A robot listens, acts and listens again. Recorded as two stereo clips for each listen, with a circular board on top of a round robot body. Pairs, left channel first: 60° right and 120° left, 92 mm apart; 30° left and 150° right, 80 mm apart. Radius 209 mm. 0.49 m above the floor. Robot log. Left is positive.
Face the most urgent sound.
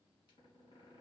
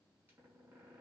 cmd idle
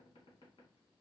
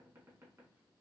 cmd idle
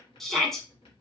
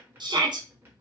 note: The shout: 145° right.
cmd yaw -145
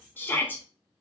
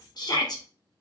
end: Found it: a shout, straight ahead.